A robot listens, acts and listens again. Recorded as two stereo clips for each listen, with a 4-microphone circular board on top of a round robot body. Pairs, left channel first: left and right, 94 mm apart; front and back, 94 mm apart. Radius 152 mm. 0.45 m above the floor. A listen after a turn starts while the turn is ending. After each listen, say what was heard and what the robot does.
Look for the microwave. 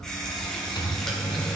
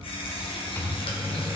The microwave: 60° left. Turn 60° left.
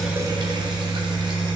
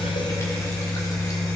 Found it: a microwave, straight ahead, 1 to 2 m away.